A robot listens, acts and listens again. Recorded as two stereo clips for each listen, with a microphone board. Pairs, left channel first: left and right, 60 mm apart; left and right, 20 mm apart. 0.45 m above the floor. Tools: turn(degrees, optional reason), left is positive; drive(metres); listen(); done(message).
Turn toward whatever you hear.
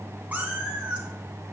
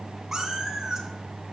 turn(degrees=-15, reason="The cat meowing: about 15° right or 165° right.")
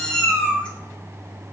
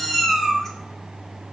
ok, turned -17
turn(degrees=15, reason="So it is at 15° left.")
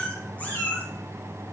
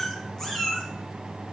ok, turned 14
turn(degrees=25, reason="The cat meowing is now 25° left.")
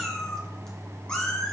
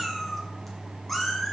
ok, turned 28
turn(degrees=15, reason="The cat meowing is now 15° left.")
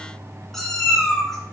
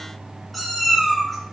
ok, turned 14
done("Found it: a cat meowing, straight ahead, 2 to 4 m away.")